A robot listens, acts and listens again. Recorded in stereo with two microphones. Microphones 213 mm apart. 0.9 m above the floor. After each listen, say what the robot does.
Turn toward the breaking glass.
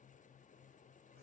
Keep listening.
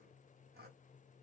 Keep listening.
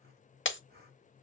Turn 60° left.
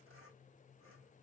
Keep listening.
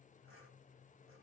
I heard breaking glass, but can't make it out now. It was about straight ahead or 60° left.